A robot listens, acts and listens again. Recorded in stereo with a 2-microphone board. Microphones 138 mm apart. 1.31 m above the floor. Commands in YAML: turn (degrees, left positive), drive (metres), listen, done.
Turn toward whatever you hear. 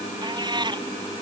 turn: -30
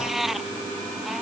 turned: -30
done: "Found it: a cat meowing, straight ahead."